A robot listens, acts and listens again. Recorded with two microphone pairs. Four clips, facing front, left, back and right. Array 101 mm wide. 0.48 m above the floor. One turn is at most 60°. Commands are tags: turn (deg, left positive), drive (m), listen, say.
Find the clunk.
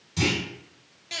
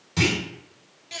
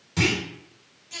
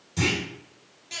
<turn deg="60"/>
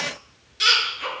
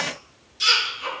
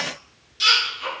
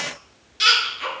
<turn deg="60"/>
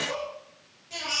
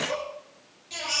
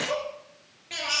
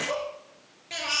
<say>Facing where the clunk came from. I can't hear it now.</say>